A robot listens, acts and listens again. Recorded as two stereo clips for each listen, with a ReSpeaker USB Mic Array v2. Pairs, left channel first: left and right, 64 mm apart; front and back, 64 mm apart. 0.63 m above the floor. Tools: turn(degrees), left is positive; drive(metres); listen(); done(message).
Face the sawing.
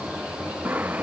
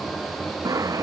turn(degrees=-155)
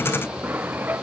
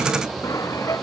turn(degrees=-30)
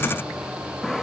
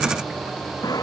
done("Facing the sawing.")